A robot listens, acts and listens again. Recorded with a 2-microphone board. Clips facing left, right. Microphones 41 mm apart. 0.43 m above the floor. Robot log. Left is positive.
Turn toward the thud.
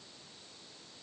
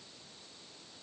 cmd idle
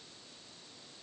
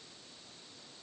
cmd idle
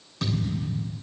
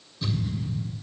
cmd yaw +90
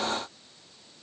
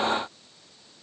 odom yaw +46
note: Nothing new. It was at 45° left.
cmd yaw +45
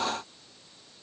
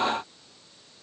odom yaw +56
note: Nothing new. It was at 10° right.
cmd yaw -10
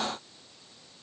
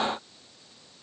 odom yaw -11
end: Facing where the thud came from. I can't hear it now.